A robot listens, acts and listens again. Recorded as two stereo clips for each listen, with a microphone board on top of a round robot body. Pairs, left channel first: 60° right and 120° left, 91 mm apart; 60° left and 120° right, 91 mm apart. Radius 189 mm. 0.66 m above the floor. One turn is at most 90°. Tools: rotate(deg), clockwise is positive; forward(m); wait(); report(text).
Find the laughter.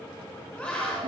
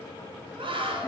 rotate(90)
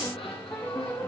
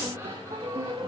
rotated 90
rotate(50)
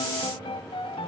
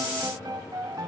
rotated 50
wait()
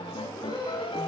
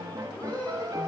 rotate(15)
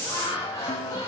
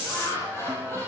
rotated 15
report("Facing the laughter, over 4 m away.")